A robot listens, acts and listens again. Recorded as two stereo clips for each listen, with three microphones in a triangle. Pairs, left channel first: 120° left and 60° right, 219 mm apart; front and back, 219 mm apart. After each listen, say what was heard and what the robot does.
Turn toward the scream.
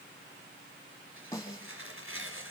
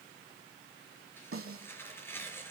Keep listening.
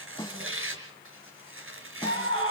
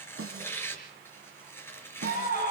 The scream: 50° right. Turn 50° right.
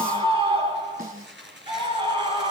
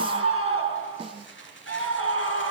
Facing the scream.